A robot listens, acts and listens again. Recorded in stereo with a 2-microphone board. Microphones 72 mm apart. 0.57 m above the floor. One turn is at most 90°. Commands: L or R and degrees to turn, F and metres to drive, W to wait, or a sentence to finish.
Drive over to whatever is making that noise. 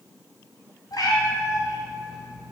L70
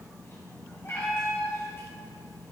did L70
L35
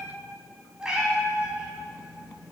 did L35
R10
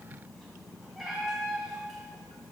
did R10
F1.0
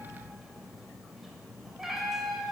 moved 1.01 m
F1.0
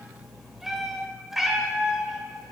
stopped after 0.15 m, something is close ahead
I am next to the cat meowing.